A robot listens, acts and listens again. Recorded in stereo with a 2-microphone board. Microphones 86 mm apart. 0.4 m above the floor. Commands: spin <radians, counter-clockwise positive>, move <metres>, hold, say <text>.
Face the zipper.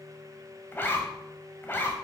spin 0.44
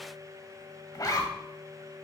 spin 2.27
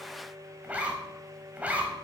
spin -0.35
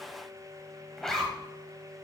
say Facing the zipper.